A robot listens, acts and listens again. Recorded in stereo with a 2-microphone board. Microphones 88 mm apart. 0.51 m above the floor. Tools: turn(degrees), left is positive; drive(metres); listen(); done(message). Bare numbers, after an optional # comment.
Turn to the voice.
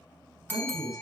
# The man speaking: about 65° right or 115° right.
turn(-65)
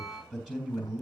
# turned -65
# So it is at 10° right.
turn(-10)
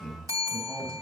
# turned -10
done("Found it: a man speaking, straight ahead.")